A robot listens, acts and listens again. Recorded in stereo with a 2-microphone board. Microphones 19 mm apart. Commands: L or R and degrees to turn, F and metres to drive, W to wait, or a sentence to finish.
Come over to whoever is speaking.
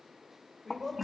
L30
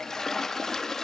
W
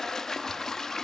W
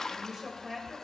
R25
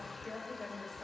F1.0
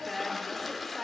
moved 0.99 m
R10
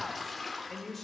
F1.0
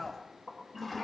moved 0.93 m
F1.0
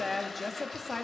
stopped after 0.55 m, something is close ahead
I am next to the woman speaking.